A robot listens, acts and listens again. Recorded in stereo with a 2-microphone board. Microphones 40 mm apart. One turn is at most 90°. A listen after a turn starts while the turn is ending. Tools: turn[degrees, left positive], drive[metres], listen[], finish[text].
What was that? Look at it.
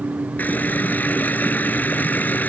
Thought: The running tap: about 50° left or 130° left.
Action: turn[50]
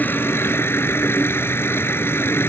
Thought: So it is at 80° left.
Action: turn[80]
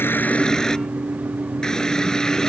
Thought: The running tap is now 15° left.
Action: turn[15]
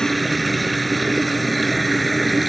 Action: finish[Facing the running tap.]